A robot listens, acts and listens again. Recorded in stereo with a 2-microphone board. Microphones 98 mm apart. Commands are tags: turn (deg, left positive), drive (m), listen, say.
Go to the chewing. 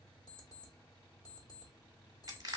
<listen/>
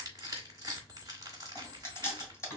<turn deg="30"/>
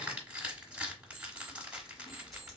<listen/>
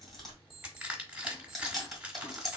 <drive m="1.0"/>
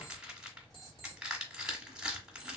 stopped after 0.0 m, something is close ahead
<listen/>
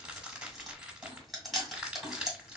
<say>Blocked. The chewing is further on, straight ahead.</say>